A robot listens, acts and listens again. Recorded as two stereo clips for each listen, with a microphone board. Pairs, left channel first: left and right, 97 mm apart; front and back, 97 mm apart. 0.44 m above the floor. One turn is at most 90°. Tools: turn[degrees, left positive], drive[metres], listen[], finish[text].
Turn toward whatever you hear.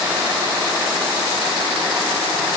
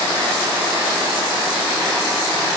Action: listen[]
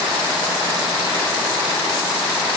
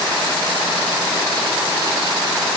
Action: listen[]
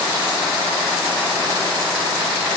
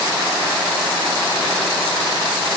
Action: finish[I can't make out anything.]